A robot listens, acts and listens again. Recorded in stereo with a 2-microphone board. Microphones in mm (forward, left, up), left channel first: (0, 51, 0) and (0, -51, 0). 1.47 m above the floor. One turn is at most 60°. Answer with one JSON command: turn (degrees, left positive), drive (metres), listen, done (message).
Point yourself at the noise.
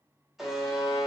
{"turn": 30}
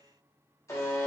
{"turn": 60}
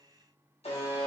{"turn": 60}
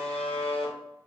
{"turn": 60}
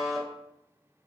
{"done": "Facing the buzzer, 1 to 2 m away."}